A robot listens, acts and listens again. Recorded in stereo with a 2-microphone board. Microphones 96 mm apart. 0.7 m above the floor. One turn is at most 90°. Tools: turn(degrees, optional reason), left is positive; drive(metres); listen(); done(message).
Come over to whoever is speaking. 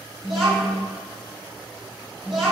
turn(degrees=-30)
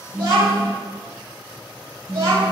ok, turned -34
turn(degrees=-90, reason="So it is at 140° right.")
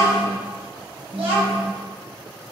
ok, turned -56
turn(degrees=-85, reason="The child speaking is now 85° right.")
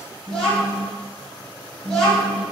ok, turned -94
turn(degrees=10, reason="The child speaking is now 10° left.")
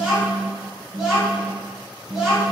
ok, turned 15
drive(metres=1.0)
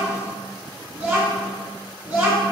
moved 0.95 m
turn(degrees=-10, reason="The child speaking is now 10° right.")
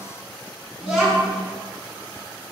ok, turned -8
drive(metres=1.0)
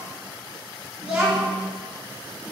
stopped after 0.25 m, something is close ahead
turn(degrees=-10, reason="The child speaking is now 10° right.")
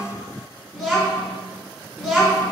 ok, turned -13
done("I am next to the child speaking.")